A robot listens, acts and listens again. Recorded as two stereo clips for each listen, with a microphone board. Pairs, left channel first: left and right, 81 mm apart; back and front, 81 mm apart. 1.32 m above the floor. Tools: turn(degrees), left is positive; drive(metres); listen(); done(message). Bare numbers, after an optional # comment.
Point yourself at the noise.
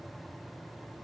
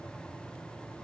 listen()
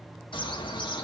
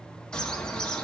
# The bird: 100° left.
turn(100)
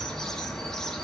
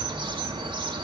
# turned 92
done("Facing the bird, 1 to 2 m away.")